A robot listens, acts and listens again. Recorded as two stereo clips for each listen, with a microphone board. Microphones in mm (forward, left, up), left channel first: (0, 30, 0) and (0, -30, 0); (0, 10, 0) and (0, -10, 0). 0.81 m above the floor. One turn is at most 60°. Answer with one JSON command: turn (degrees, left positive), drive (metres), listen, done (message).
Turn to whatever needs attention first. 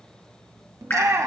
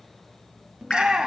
{"turn": -60}
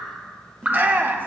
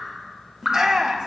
{"turn": -40}
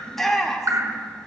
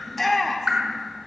{"done": "Facing the shout."}